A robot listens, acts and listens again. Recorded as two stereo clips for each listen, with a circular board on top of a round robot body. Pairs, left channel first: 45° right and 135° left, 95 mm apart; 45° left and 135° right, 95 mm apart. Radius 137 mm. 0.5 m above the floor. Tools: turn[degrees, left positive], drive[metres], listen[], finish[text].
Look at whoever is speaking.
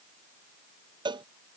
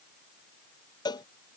Action: listen[]
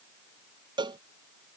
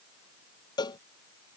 Action: listen[]
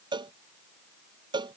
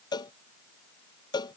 Action: finish[I can't make out anyone speaking, only a cowbell.]